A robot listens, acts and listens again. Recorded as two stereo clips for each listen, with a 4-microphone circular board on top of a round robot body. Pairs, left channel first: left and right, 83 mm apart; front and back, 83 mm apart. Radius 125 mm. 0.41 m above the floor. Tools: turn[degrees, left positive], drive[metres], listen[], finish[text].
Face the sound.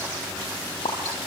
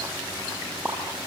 Thought: The pop: 100° left.
Action: turn[100]
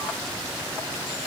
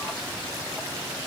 Action: finish[I heard a pop from this way, but can't make it out now.]